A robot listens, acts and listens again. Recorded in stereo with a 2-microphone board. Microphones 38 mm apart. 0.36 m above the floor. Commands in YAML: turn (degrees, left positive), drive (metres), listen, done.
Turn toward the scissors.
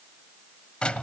listen: true
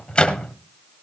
listen: true
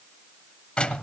done: "I can't make out scissors, only a microwave."